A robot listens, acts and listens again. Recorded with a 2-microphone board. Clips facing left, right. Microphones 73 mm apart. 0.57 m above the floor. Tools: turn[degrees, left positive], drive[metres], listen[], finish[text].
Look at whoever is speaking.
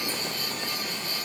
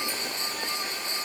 Action: listen[]
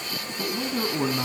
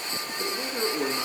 Thought: The man speaking: about 70° left or 110° left.
Action: turn[70]
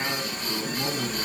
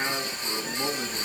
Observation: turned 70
Action: finish[Found it: a man speaking, straight ahead, 2 to 4 m away.]